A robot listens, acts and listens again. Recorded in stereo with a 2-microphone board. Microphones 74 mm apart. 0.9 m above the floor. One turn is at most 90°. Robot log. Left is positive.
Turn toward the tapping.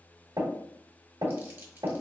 cmd yaw -90
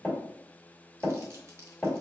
end: Facing the tapping, 2 to 4 m away.